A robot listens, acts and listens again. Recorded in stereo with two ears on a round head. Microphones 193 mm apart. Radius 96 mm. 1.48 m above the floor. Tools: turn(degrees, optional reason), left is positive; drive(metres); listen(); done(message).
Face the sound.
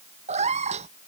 turn(degrees=-30, reason="The cat meowing: about 30° right or 150° right.")
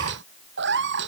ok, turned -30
turn(degrees=-125, reason="So it is at 125° right.")
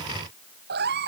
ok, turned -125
turn(degrees=-50, reason="The cat meowing is now 50° right.")
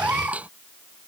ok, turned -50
done("Facing the cat meowing.")